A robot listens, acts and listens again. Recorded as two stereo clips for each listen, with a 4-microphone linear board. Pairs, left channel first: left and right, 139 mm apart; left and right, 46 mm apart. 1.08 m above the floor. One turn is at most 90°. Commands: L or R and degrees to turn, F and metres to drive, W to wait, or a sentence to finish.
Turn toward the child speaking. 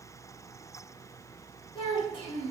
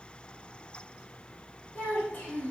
L40
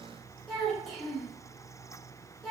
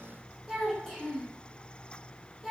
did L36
Found it: a child speaking, straight ahead, 1 to 2 m away.